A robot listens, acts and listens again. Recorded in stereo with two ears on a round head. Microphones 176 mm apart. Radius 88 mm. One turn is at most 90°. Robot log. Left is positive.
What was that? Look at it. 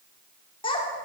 note: The child speaking: about 25° left or 155° left.
cmd yaw +25
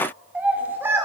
note: So it is at 15° right.
cmd yaw -15
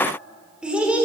end: Facing the child speaking.